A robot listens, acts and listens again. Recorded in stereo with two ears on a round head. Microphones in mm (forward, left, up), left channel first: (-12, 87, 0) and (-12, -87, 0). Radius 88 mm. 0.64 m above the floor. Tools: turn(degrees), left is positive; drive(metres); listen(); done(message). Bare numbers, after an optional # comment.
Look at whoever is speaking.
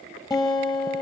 listen()
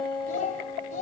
# The child speaking: about 40° left or 140° left.
turn(40)
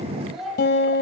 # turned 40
done("Facing the child speaking.")